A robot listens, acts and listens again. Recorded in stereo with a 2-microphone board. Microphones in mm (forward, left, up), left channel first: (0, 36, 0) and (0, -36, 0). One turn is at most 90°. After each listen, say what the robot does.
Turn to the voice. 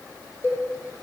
Keep listening.
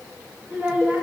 Turn 15° right.
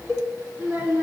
Turn 90° right.
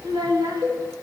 Turn 80° right.
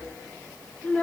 Turn 20° left.
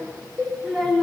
Facing the child speaking.